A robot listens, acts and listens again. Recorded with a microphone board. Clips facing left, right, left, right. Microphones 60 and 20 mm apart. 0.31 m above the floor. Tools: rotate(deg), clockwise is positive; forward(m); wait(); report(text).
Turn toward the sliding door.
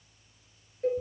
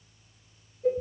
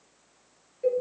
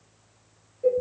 wait()
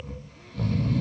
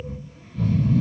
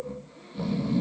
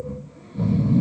wait()
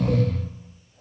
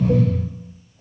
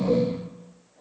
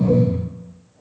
report("I can't make out a sliding door, only a cowbell and snoring.")